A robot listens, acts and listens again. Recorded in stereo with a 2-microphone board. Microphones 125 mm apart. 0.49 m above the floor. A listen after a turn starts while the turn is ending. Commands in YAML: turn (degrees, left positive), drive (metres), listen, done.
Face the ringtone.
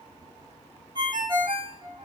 turn: -40
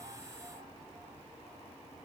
listen: true
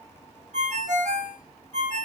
turn: -100
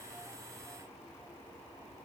listen: true
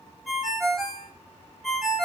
done: "Found it: a ringtone, straight ahead, under 1 m away."